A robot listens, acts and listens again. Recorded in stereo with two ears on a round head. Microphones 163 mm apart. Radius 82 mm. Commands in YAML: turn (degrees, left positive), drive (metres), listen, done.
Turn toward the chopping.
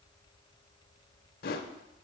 listen: true
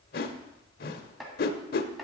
turn: 30
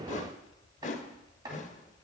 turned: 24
turn: -25
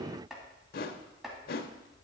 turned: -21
done: "Found it: chopping, straight ahead, 2 to 4 m away."